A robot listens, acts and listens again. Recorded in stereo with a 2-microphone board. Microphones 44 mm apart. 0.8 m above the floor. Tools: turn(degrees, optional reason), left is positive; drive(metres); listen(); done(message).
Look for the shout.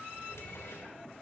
listen()
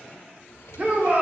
turn(degrees=-40, reason="The shout: about 40° right or 140° right.")
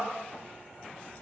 listen()
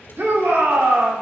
turn(degrees=-95, reason="So it is at 95° right.")
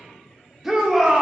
done("Found it: a shout, straight ahead.")